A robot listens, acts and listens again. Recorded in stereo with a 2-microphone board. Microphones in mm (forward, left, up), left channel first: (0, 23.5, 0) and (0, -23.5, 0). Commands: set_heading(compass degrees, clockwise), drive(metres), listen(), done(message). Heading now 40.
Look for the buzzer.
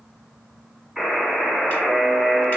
set_heading(70)
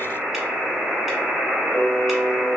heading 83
set_heading(218)
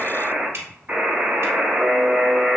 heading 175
set_heading(220)
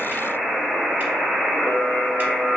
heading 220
done("Found it: a buzzer, straight ahead.")